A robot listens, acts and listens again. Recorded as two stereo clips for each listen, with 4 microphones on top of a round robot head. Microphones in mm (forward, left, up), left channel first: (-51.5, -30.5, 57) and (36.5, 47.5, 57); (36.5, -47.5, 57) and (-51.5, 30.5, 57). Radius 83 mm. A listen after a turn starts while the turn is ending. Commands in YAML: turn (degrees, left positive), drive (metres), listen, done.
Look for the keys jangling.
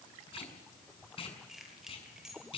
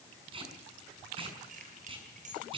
turn: 125
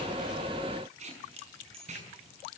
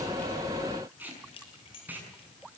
done: "Facing the keys jangling, over 4 m away."